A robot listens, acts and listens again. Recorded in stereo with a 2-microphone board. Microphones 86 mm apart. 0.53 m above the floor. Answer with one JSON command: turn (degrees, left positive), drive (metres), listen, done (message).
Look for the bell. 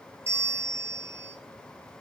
{"turn": -30}
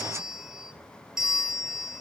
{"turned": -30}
{"done": "Facing the bell, 1 to 2 m away."}